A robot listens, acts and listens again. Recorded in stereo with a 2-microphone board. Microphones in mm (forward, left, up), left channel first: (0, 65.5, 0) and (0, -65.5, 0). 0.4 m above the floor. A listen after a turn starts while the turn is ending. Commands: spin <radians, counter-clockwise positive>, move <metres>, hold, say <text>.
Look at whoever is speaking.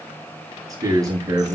spin -0.44
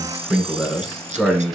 say Found it: a man speaking, straight ahead, over 4 m away.